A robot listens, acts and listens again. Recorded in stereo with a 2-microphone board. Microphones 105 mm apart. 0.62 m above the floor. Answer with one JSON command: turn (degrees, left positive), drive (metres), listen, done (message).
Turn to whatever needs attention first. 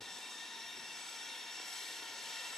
{"listen": true}
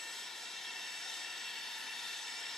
{"listen": true}
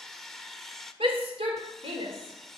{"turn": -65}
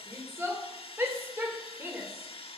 {"turn": -25}
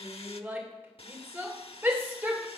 {"turn": -25}
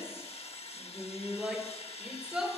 {"turn": -10}
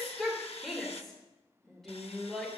{"done": "Found it: a shout, straight ahead, 2 to 4 m away."}